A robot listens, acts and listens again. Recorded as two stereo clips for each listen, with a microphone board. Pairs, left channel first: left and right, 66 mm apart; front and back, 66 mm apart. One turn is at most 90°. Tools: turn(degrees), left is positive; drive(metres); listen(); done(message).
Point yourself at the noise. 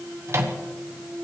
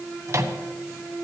turn(degrees=-90)
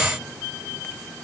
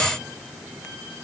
turn(degrees=-45)
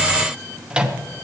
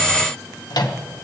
turn(degrees=-15)
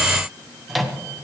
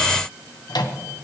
done("Found it: a microwave, straight ahead.")